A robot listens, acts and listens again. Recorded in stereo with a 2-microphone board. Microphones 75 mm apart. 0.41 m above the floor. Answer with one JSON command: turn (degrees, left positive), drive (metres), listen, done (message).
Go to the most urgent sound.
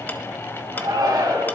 {"turn": -65}
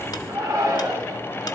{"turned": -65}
{"turn": -45}
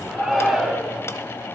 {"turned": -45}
{"drive": 1.0}
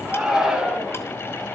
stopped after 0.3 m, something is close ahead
{"done": "Blocked. The shout is further on, straight ahead."}